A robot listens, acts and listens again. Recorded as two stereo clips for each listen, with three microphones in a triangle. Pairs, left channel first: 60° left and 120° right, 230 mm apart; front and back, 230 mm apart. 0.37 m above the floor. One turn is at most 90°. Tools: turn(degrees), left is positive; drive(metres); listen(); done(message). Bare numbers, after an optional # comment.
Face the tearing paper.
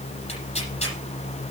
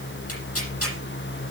done("Facing the tearing paper, over 4 m away.")